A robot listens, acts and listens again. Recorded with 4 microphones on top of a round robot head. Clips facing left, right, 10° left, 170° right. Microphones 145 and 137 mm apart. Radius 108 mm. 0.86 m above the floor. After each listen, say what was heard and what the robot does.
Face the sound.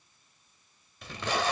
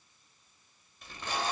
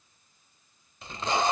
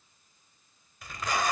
The tape being pulled: 75° left. Turn 75° left.
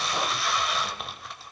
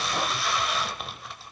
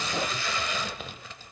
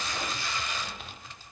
Facing the tape being pulled, 1 to 2 m away.